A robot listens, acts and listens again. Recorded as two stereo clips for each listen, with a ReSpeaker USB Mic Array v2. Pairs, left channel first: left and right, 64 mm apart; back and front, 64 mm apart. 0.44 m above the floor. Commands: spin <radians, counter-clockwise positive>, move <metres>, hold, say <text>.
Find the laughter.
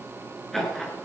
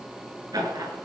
say Found it: laughter, straight ahead, over 4 m away.